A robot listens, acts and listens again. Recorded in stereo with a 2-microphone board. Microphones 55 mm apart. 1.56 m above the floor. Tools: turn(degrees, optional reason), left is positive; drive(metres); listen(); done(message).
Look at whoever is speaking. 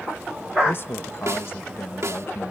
turn(degrees=45, reason="The man speaking: about 45° left or 135° left.")
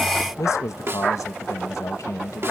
turn(degrees=85, reason="So it is at 85° left.")
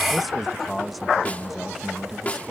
done("Facing the man speaking.")